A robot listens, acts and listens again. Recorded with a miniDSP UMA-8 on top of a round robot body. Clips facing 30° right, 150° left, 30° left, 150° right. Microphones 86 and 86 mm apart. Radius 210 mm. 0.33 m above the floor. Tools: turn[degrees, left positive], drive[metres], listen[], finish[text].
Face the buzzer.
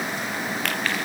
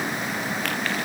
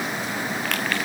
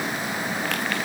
Action: listen[]
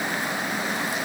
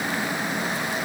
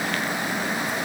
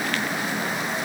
Action: listen[]
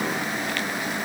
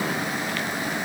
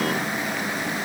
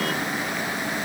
Action: finish[I can't make out a buzzer to turn to.]